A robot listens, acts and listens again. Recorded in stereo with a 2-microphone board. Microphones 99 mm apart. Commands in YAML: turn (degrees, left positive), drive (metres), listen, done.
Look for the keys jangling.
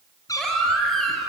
listen: true
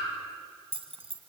turn: -75
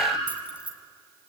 turn: -15
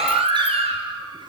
listen: true
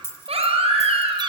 turn: 25
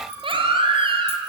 listen: true
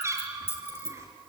turn: 25
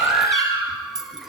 done: "Facing the keys jangling, 2 to 4 m away."